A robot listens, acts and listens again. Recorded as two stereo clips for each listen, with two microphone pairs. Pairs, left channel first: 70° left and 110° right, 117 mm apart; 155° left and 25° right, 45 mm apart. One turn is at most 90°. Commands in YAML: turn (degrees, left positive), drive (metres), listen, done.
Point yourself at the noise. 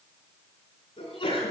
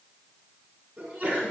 turn: 30
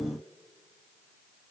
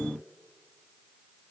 done: "I heard a sneeze from this way, but can't make it out now."